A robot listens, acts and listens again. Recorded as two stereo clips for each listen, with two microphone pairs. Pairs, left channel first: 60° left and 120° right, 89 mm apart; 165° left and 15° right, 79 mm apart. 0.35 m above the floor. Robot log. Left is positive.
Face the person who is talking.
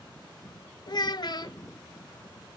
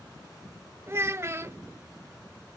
note: The child speaking: 40° left.
cmd yaw +40
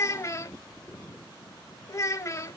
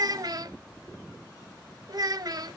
note: The child speaking is now 10° left.
cmd yaw +10
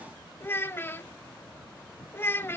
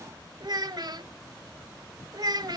end: Facing the child speaking, under 1 m away.